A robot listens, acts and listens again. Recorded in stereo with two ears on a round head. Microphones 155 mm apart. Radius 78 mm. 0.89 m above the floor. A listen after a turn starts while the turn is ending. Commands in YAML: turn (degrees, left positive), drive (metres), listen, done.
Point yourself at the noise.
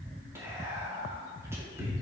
turn: -15
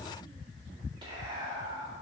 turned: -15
turn: -150
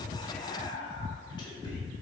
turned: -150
turn: 30
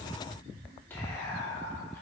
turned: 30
turn: 15
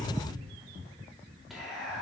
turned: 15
done: "Facing the whispering."